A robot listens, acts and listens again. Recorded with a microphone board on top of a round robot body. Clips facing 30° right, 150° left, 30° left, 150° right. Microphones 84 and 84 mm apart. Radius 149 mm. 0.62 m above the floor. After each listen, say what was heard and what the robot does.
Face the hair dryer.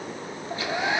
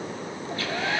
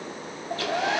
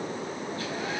The hair dryer: 45° left. Turn 45° left.
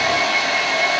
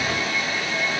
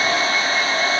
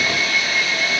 The hair dryer is now 25° right. Turn 25° right.
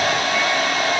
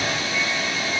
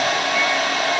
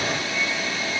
Found it: a hair dryer, straight ahead.